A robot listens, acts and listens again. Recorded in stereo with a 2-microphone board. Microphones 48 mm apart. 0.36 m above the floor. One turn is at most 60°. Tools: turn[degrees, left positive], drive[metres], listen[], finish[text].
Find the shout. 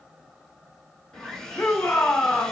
Thought: The shout: about 50° left or 130° left.
Action: turn[50]
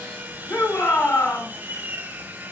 Thought: So it is at 75° left.
Action: turn[60]
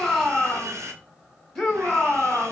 Thought: The shout is now 15° left.
Action: turn[15]
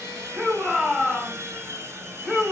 Action: finish[Facing the shout, 2 to 4 m away.]